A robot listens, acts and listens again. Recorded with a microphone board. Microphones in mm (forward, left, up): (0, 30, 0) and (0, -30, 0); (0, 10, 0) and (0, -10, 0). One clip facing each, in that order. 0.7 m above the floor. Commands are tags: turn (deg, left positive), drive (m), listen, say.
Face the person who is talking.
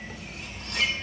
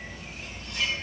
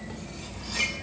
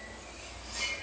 <listen/>
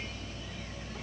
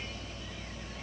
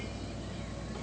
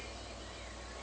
<listen/>
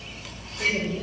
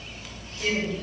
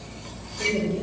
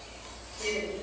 <turn deg="25"/>
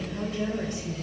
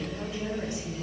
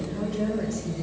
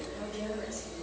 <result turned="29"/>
<turn deg="120"/>
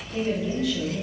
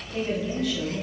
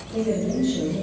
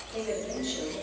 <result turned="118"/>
<say>Found it: a woman speaking, straight ahead.</say>